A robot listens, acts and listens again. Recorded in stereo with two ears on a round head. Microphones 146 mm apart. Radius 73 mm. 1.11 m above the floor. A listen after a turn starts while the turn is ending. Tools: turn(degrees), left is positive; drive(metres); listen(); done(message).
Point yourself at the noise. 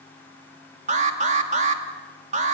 turn(degrees=-50)
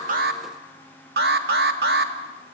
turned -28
turn(degrees=-105)
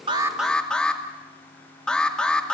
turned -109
done("Found it: an alarm, straight ahead, 1 to 2 m away.")